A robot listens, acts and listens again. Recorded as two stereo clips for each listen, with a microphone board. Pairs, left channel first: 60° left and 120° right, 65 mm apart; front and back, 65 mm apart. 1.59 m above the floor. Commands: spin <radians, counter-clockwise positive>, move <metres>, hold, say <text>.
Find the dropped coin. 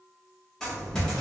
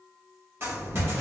spin 2.44
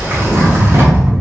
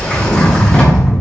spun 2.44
say Facing where the dropped coin came from. I can't hear it now.